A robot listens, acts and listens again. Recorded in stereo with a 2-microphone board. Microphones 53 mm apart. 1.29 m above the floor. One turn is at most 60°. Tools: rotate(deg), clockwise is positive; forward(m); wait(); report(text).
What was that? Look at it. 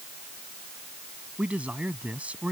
rotate(25)
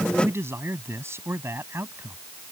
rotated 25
rotate(60)
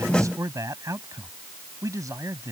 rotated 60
rotate(60)
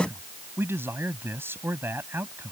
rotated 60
rotate(45)
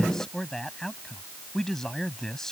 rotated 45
rotate(-10)
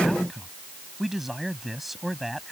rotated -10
report("Found it: a man speaking, straight ahead.")